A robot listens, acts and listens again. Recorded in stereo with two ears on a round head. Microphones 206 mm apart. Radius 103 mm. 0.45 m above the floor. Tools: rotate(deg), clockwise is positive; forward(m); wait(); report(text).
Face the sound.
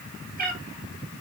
rotate(40)
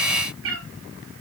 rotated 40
rotate(120)
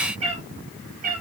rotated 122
rotate(40)
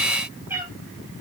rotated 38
rotate(10)
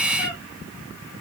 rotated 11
report("Found it: a cat meowing, straight ahead.")